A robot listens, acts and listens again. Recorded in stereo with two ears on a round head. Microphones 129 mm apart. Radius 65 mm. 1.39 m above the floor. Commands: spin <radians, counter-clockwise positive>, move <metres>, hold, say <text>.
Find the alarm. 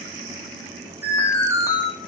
spin -0.35
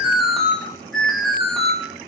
say Facing the alarm.